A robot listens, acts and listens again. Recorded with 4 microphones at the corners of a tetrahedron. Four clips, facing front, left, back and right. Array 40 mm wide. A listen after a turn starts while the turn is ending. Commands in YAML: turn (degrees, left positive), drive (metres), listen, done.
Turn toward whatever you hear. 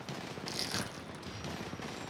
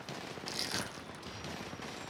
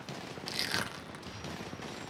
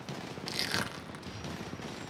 turn: -135
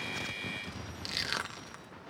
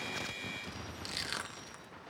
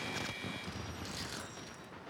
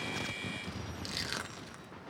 done: "Facing the crushing."